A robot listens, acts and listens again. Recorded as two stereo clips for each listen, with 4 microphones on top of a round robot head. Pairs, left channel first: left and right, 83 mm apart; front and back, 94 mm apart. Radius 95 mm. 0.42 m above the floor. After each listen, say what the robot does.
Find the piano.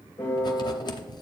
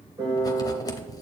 Turn 155° left.
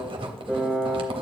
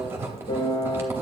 Turn 10° right.
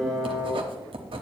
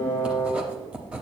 Facing the piano, 2 to 4 m away.